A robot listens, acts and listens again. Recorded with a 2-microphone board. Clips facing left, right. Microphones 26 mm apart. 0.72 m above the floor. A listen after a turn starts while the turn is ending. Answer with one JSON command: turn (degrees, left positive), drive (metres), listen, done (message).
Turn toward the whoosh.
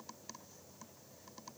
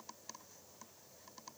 {"listen": true}
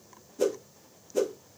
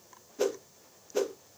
{"turn": -25}
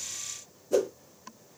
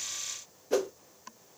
{"turn": -120}
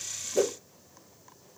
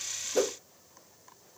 {"listen": true}
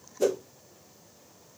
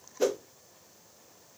{"turn": -40}
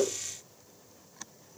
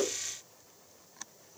{"done": "Facing the whoosh."}